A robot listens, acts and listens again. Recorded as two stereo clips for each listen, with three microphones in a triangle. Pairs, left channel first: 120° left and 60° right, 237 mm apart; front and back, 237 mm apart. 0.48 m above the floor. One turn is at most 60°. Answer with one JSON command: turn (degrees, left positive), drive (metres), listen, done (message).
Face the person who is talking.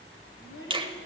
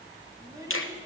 {"turn": 60}
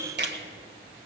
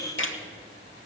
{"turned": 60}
{"turn": 45}
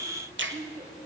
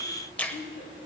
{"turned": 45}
{"turn": 15}
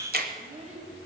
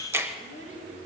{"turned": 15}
{"done": "Found it: a child speaking, straight ahead."}